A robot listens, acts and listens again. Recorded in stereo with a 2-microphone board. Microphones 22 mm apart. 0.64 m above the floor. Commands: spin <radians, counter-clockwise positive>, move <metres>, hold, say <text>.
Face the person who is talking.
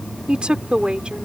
spin -0.87
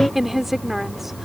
spin -0.17
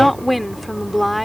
say Facing the woman speaking.